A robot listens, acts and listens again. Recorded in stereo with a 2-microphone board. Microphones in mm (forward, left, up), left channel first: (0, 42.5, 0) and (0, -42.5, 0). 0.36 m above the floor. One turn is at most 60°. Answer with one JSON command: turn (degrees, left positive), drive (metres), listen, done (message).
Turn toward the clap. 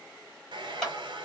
{"turn": 30}
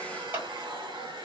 {"turn": -25}
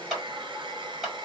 {"done": "Facing the clap, 1 to 2 m away."}